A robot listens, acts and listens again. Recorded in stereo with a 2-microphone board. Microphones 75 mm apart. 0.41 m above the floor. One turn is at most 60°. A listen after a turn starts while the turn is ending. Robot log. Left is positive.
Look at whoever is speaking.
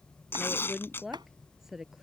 cmd yaw -30
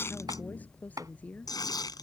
note: So it is at 20° left.
cmd yaw +20
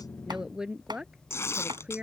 note: The woman speaking is now 15° right.
cmd yaw -15
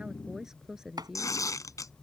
note: The woman speaking is now 10° right.
cmd yaw -10
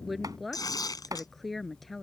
end: Facing the woman speaking.